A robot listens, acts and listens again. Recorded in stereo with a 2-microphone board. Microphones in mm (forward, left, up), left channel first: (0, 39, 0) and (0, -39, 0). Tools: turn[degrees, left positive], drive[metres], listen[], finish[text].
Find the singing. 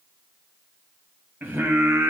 Thought: The singing: about 25° right or 155° right.
Action: turn[-25]
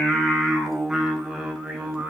Action: turn[-30]
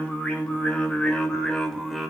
Action: finish[Facing the singing, 2 to 4 m away.]